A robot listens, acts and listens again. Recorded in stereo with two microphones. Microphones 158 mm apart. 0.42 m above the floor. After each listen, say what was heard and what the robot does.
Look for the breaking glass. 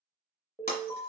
The breaking glass: about 70° left or 110° left. Turn 70° left.
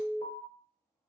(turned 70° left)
Keep listening.
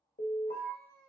I heard breaking glass, but can't make it out now. It was about straight ahead or 40° left.